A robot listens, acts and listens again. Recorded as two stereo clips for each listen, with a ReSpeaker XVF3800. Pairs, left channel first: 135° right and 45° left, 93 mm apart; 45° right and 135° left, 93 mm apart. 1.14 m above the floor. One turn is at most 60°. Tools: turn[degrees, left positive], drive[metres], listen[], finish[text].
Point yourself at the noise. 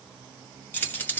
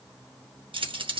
Thought: The keys jangling: 155° left.
Action: turn[60]
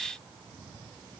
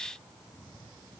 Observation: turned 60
Thought: Nothing new. It was at 95° left.
Action: turn[60]
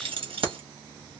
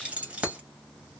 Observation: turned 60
Thought: The keys jangling is now 55° left.
Action: turn[55]
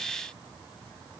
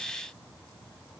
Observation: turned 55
Action: listen[]
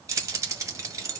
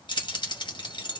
Thought: The keys jangling is now 15° right.
Action: turn[-15]
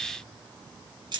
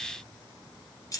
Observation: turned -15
Action: finish[Facing the keys jangling.]